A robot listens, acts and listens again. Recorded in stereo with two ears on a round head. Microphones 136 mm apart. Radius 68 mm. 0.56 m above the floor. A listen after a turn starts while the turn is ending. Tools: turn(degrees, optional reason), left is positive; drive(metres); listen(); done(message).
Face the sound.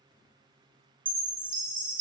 turn(degrees=-30, reason="The chime: about 30° right or 150° right.")
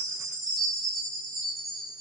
done("Found it: a chime, straight ahead, 1 to 2 m away.")